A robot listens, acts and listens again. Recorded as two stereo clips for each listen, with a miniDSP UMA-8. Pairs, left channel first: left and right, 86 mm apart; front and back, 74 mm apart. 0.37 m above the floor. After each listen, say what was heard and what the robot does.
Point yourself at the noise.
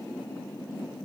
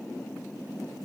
Keep listening.
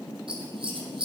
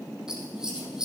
The scissors: 100° right. Turn 100° right.
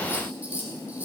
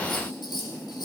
The scissors is now 20° right. Turn 20° right.
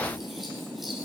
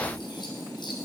Keep listening.
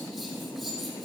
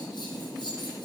Keep listening.
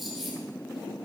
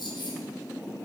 Facing the scissors, over 4 m away.